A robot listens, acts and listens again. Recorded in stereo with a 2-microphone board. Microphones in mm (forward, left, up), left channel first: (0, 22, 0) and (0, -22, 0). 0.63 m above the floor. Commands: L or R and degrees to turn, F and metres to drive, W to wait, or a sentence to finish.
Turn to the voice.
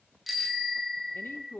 L60
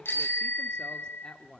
L20
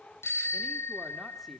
W
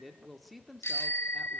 Facing the woman speaking, 1 to 2 m away.